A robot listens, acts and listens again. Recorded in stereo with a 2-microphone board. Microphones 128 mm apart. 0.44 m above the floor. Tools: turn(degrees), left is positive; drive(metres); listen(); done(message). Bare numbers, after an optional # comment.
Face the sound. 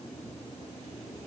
listen()
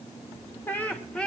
turn(30)
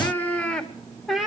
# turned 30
turn(-30)
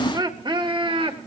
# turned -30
# So it is at 135° right.
turn(-135)
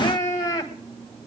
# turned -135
# The laughter is now 30° left.
turn(30)
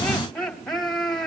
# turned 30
done("Facing the laughter.")